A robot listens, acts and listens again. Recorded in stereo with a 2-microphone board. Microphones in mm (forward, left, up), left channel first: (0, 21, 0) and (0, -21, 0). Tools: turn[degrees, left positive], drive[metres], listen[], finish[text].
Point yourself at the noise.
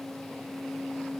Action: listen[]
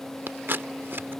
Thought: The scissors: about 60° right or 120° right.
Action: turn[-60]
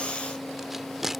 Action: finish[Found it: scissors, straight ahead.]